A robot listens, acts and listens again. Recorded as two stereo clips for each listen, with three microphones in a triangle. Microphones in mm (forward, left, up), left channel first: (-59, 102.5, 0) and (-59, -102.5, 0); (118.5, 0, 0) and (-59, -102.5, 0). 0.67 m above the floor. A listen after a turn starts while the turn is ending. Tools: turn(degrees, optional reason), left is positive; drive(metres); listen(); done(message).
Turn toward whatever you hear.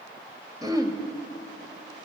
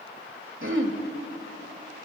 turn(degrees=-165, reason="The throat clearing: 165° right.")
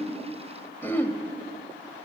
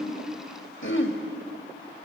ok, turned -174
turn(degrees=10, reason="The throat clearing is now 10° left.")
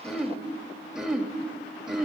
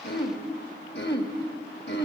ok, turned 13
done("Facing the throat clearing.")